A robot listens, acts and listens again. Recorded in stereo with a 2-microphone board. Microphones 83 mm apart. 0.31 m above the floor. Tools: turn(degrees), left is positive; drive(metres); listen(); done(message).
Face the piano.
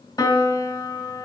turn(degrees=60)
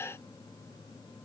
listen()
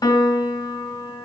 turn(degrees=55)
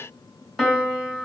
done("Facing the piano.")